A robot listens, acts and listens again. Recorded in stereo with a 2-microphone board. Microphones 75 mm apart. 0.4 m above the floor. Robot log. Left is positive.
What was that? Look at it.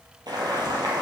note: The boiling: about 65° right or 115° right.
cmd yaw -65
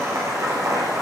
note: So it is at 50° right.
cmd yaw -50
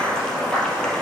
note: The boiling is now 10° left.
cmd yaw +10
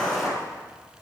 end: Found it: boiling, straight ahead.